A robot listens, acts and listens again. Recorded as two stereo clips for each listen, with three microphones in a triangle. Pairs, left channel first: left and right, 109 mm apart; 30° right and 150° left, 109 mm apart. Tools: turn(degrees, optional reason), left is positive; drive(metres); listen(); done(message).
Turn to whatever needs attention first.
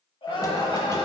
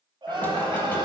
turn(degrees=115, reason="The crying: 115° left.")
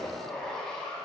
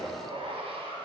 listen()
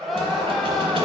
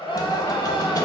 done("Found it: crying, straight ahead, 1 to 2 m away.")